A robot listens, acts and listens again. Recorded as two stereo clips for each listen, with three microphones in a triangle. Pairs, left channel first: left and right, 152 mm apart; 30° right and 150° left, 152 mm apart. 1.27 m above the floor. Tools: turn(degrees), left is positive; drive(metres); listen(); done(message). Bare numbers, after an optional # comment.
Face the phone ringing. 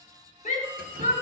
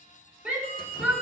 # The phone ringing: 15° right.
turn(-15)
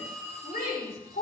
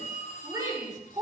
done("Facing the phone ringing.")